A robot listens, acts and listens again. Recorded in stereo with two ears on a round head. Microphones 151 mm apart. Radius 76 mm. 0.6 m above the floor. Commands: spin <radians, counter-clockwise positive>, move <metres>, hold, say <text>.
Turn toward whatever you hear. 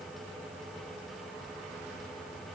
hold
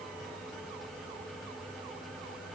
hold
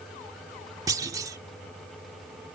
spin -0.35
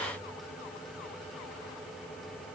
hold
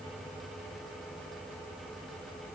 say I heard a clunk, but can't make it out now. It was about straight ahead or 140° right.